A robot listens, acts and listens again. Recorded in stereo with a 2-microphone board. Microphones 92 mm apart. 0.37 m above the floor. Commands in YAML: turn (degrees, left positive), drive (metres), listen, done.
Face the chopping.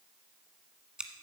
listen: true
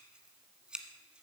listen: true
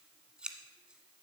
done: "I can't make out chopping to turn to."